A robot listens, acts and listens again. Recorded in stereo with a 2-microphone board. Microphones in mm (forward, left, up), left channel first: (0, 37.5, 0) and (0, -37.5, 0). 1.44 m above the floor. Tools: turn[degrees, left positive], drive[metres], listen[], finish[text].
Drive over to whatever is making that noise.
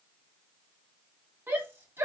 Thought: The shout: about 30° right or 150° right.
Action: turn[-30]
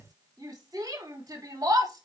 Thought: So it is at 120° right.
Action: turn[-120]
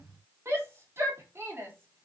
Thought: The shout is now 35° right.
Action: turn[-35]
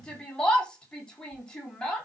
Thought: The shout is now 10° left.
Action: turn[10]
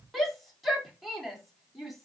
Action: drive[1.0]
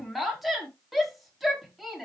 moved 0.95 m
Action: drive[1.0]
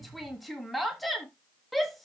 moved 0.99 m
Action: drive[1.0]
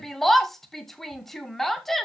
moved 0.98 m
Action: drive[1.0]
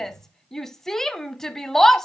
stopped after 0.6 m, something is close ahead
Action: finish[I am next to the shout.]